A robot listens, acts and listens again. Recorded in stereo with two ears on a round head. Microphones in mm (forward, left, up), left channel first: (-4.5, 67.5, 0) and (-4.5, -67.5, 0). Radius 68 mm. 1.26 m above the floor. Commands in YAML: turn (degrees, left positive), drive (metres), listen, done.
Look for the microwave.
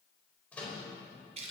turn: 30
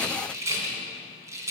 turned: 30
listen: true
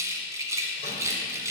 listen: true
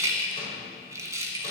done: "I heard a microwave, but can't make it out now. It was about 20° right or 140° left."